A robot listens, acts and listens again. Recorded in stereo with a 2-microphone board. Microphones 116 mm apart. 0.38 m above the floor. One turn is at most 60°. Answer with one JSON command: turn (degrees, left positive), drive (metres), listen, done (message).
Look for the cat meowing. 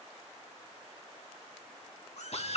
{"turn": 60}
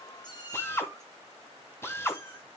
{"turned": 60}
{"turn": 25}
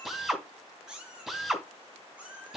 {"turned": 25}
{"turn": -10}
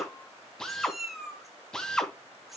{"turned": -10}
{"done": "Found it: a cat meowing, straight ahead."}